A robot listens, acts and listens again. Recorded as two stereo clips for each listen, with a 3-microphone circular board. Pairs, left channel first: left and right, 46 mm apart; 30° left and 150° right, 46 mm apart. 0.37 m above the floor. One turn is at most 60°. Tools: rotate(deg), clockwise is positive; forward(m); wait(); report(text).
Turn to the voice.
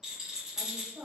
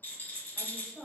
rotate(50)
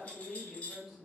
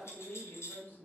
report("Facing the woman speaking, 1 to 2 m away.")